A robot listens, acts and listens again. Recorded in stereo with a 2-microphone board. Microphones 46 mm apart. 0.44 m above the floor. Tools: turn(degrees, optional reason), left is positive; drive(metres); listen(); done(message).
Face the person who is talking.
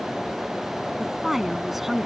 turn(degrees=-30)
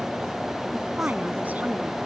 turn(degrees=-145, reason="So it is at 145° right.")
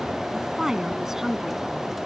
turn(degrees=-10, reason="The woman speaking is now 10° right.")
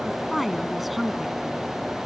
done("Found it: a woman speaking, straight ahead.")